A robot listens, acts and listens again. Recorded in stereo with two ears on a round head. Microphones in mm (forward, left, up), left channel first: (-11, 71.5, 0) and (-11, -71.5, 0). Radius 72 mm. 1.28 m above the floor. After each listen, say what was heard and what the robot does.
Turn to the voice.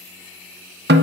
Keep listening.
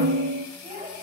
The child speaking: about 30° right or 150° right. Turn 30° right.
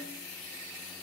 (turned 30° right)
Keep listening.
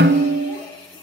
Keep listening.
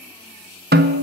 I heard a child speaking, but can't make it out now. It was about straight ahead or 120° right.